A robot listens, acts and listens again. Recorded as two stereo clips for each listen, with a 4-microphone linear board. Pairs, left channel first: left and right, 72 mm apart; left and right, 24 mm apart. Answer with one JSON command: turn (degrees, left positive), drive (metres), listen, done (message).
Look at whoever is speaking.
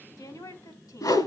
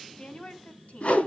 {"turn": 55}
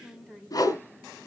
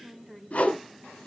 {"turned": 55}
{"done": "Found it: a woman speaking, straight ahead."}